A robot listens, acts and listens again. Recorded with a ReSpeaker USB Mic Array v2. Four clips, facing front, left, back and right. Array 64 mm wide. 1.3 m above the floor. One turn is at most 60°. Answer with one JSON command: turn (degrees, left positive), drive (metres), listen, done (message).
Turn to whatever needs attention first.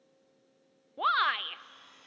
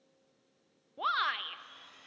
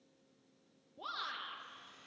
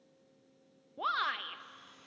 {"done": "Found it: a shout, straight ahead."}